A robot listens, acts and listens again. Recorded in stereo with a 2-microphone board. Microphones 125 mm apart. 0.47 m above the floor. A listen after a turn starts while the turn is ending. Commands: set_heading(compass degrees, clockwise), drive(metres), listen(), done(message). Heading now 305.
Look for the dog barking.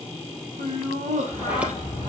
set_heading(270)
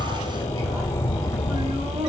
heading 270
set_heading(155)
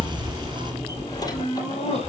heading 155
set_heading(145)
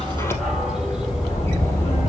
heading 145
done("Facing the dog barking, over 4 m away.")